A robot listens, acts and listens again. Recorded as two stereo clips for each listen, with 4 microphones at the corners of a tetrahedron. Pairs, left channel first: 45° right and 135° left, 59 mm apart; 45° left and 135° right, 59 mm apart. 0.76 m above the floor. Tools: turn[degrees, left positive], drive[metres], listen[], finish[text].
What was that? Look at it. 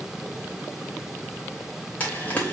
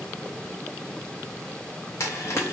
Thought: The frying: 20° left.
Action: turn[20]
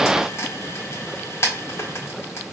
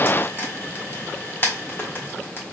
Action: finish[Found it: frying, straight ahead.]